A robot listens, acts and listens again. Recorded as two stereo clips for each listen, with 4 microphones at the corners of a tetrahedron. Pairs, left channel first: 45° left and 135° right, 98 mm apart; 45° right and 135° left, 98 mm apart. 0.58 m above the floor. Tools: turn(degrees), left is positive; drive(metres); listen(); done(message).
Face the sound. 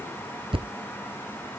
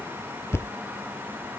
turn(degrees=-110)
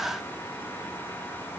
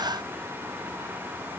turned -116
done("I heard a thud from this way, but can't make it out now.")